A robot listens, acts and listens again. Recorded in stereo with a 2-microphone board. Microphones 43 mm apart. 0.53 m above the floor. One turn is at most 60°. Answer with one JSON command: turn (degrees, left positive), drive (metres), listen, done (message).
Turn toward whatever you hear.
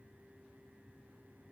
{"listen": true}
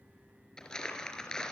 {"turn": 30}
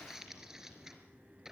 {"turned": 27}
{"turn": -15}
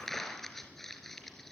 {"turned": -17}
{"done": "Facing the crumpling."}